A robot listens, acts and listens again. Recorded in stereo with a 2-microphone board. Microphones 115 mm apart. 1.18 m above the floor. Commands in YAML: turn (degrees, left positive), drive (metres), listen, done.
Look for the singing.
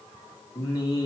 turn: 35
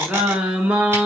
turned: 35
turn: -15
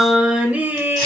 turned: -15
turn: -20
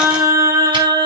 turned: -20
turn: -35
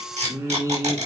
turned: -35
turn: -30
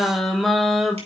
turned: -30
done: "Found it: singing, straight ahead."